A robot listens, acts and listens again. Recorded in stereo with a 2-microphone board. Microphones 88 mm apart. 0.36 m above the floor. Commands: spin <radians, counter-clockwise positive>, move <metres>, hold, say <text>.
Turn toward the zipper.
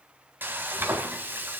hold
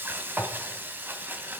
hold
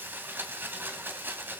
say I can't make out a zipper, only frying.